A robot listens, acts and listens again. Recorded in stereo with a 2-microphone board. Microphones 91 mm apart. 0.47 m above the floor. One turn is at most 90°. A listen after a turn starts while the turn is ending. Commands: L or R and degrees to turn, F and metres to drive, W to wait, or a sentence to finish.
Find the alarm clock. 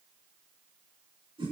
W
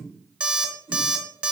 R30
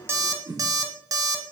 R90
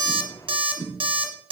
R75
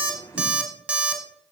R15
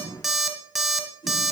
Found it: an alarm clock, straight ahead.